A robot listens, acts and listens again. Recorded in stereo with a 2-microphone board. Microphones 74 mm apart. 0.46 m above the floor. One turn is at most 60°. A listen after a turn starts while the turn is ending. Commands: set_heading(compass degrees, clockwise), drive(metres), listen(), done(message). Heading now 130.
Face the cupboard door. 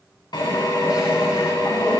listen()
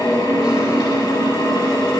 listen()
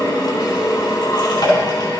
done("I can't make out a cupboard door to turn to.")